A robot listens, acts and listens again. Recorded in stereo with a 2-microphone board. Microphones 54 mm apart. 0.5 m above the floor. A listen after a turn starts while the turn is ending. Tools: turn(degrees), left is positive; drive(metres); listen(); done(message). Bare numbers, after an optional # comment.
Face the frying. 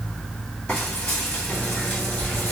# The frying: about 20° left or 160° left.
turn(20)
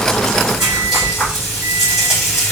done("Facing the frying, 2 to 4 m away.")